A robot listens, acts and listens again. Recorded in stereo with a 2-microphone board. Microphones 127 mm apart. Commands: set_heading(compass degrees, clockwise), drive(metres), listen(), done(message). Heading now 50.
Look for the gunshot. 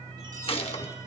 set_heading(0)
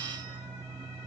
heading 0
listen()
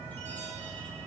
done("I heard a gunshot, but can't make it out now. It was about straight ahead or 80° left.")